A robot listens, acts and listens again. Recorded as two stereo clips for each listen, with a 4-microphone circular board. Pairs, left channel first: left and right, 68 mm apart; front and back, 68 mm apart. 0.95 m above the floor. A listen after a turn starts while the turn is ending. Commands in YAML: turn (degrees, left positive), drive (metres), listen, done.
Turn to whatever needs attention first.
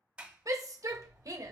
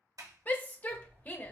turn: -60
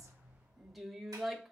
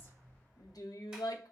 done: "Found it: a shout, straight ahead, under 1 m away."